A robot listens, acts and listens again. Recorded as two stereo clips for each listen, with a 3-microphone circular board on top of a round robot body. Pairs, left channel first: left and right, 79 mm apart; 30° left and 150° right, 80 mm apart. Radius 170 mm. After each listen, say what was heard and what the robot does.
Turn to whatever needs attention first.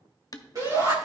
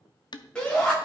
The shout: 45° right. Turn 45° right.
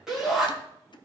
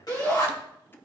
Facing the shout, over 4 m away.